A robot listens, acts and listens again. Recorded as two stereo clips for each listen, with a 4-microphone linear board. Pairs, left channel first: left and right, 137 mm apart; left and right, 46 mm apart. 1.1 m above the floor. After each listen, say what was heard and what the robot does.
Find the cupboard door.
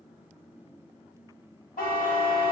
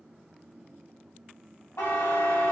Keep listening.
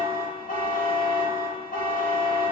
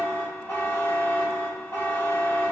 Keep listening.
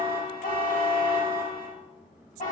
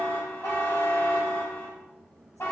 I can't make out a cupboard door, only a buzzer.